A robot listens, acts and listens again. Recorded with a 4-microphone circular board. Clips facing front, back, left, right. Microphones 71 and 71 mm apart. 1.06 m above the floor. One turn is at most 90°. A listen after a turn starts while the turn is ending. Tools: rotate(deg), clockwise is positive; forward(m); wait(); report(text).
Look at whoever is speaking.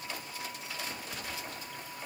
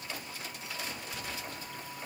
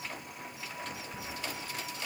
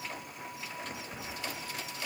wait()
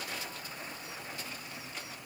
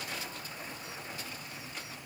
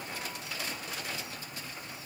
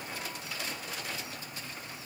wait()
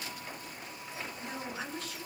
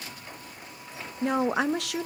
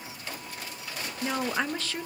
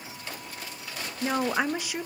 rotate(90)
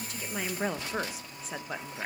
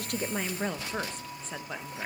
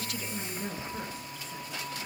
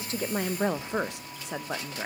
rotate(85)
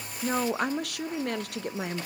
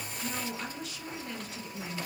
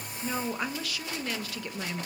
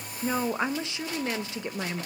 rotate(25)
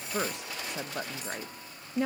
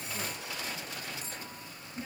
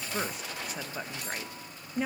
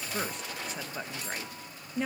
report("Found it: a woman speaking, straight ahead.")